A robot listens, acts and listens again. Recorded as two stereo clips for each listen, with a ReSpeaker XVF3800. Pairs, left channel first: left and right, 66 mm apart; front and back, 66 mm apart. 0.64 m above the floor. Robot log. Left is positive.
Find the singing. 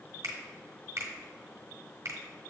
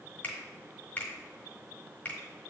cmd idle
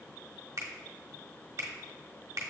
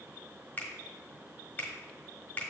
cmd idle
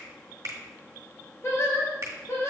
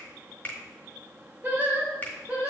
note: The singing: 120° left.
cmd yaw +120
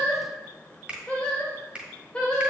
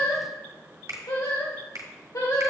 note: The singing is now 15° left.
cmd yaw +15
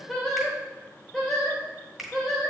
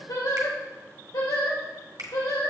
end: Found it: singing, straight ahead.